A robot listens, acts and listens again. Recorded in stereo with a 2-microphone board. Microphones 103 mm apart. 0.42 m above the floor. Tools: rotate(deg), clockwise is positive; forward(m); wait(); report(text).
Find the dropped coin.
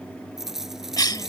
rotate(30)
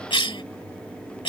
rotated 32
wait()
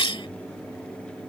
report("I heard a dropped coin, but can't make it out now. It was about 25° left or 145° right.")